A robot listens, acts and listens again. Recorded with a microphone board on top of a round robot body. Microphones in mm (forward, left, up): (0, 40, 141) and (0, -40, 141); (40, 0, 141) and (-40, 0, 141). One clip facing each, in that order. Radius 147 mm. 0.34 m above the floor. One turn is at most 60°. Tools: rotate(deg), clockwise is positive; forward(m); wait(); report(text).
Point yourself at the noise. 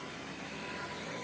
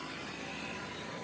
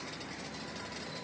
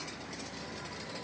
wait()
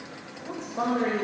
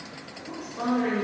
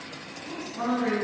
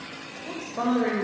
rotate(-60)
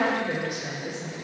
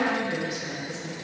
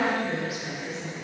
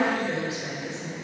rotate(-60)
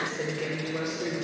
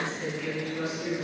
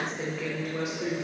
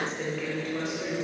rotate(-60)
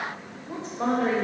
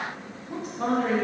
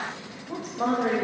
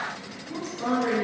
rotate(-30)
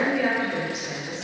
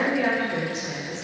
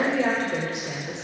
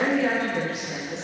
report("Facing the woman speaking.")